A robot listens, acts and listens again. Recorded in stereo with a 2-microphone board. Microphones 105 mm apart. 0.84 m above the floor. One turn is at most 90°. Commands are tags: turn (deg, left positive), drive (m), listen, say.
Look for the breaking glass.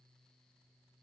<listen/>
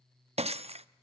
<turn deg="-75"/>
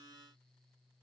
<listen/>
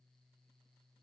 <say>I heard breaking glass, but can't make it out now. It was about straight ahead or 30° right.</say>